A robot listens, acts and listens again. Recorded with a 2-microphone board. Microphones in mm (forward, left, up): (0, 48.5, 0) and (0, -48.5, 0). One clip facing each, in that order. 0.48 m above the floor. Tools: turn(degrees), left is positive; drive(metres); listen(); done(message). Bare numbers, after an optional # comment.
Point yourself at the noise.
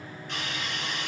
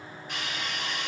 turn(-30)
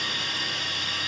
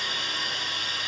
# So it is at 145° right.
turn(-145)
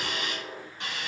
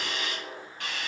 # The hiss is now 25° left.
turn(25)
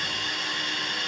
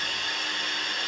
done("Facing the hiss, 1 to 2 m away.")